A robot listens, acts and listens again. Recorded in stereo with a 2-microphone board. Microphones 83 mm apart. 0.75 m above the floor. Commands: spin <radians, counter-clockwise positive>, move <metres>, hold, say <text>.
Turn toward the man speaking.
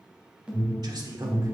spin -0.87
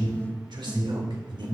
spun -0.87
spin -1.31
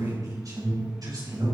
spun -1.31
spin -0.87
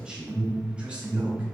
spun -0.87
spin -0.26
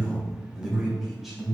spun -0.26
hold
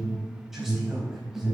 hold
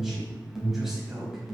say Found it: a man speaking, straight ahead.